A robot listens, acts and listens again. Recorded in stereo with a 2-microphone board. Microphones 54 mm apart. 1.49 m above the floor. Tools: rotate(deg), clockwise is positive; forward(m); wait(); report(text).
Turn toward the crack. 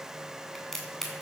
rotate(-30)
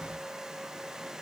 wait()
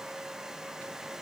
report("I heard a crack, but can't make it out now. It was about 20° right or 140° left.")